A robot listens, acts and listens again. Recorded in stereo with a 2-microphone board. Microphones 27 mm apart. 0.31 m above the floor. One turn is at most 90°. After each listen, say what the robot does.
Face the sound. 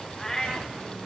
Turn 15° left.
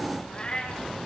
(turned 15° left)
Turn 90° left.
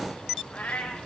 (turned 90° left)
Turn 60° left.
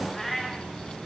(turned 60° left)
Found it: a cat meowing, straight ahead, 2 to 4 m away.